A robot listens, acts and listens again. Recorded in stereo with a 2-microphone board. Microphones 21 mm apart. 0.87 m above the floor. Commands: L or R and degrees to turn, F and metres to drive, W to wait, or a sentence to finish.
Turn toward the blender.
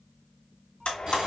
L70
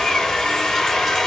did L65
L45
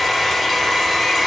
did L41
Facing the blender, 1 to 2 m away.